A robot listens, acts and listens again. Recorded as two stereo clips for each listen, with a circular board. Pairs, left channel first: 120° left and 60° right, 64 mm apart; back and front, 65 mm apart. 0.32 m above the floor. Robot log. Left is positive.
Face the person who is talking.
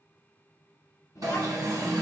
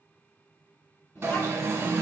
note: The child speaking: 140° left.
cmd yaw +140
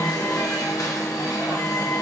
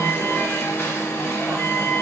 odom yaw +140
cmd idle
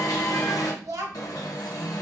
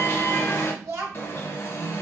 note: The child speaking is now 40° right.
cmd yaw -40
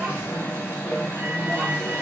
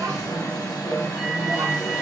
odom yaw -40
cmd idle
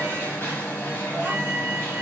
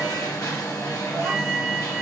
cmd idle
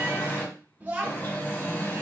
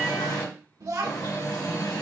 end: Facing the child speaking, 1 to 2 m away.